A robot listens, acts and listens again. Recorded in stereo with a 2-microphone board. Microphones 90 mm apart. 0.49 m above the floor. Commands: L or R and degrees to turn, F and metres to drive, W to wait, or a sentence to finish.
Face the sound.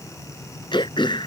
L90
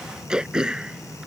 R10
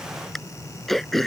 Found it: throat clearing, straight ahead.